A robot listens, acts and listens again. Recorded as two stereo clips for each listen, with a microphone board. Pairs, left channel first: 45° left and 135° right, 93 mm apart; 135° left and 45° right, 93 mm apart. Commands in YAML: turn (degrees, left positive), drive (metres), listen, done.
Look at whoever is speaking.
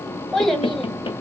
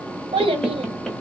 turn: -45
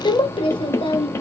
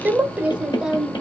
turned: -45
turn: 45
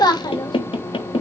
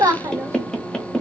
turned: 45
turn: 10
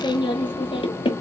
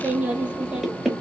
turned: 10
turn: 35
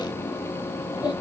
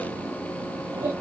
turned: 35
done: "Found it: a child speaking, straight ahead."